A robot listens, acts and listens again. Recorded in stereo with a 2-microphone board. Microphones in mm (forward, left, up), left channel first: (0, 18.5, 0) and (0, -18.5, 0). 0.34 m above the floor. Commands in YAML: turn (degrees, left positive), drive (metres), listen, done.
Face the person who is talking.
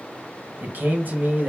turn: -55
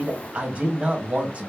turn: -45
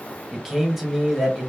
turn: -10
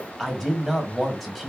done: "Found it: a man speaking, straight ahead, 1 to 2 m away."